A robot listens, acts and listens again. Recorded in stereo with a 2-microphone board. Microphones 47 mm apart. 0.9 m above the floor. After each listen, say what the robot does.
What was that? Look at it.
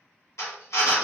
Turn 90° left.
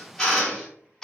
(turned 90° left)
Turn 10° left.
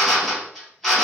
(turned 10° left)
Found it: a drill, straight ahead, 1 to 2 m away.